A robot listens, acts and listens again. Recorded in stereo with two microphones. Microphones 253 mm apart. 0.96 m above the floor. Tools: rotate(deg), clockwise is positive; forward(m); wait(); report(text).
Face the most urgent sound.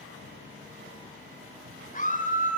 rotate(-35)
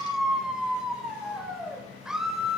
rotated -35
report("Found it: a scream, straight ahead.")